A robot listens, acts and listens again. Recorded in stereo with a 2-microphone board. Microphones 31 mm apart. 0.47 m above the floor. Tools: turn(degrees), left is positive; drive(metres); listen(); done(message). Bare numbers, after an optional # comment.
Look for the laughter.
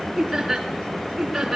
turn(-30)
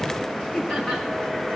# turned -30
# So it is at 20° left.
turn(20)
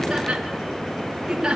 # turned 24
# The laughter is now 15° right.
turn(-15)
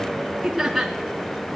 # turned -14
done("Found it: laughter, straight ahead, 2 to 4 m away.")